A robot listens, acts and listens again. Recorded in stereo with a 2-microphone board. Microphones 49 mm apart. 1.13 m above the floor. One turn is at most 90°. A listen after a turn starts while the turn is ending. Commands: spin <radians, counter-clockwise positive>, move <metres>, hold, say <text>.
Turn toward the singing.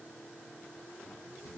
hold
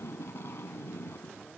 hold
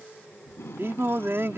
spin -1.05
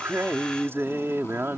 spin -1.05
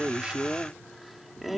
say Found it: singing, straight ahead.